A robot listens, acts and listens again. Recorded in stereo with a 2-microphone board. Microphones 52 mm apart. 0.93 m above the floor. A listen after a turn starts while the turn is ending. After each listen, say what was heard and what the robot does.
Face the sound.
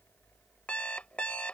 The alarm clock: about 25° left or 155° left. Turn 25° left.
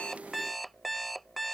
Facing the alarm clock.